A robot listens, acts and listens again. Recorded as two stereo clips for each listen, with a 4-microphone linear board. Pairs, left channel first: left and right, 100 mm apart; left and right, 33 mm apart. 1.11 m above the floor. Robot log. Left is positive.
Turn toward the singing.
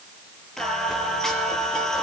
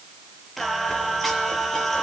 cmd yaw +30
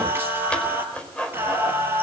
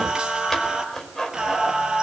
note: So it is at 25° right.
cmd yaw -25
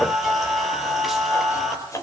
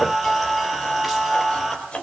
end: Facing the singing, over 4 m away.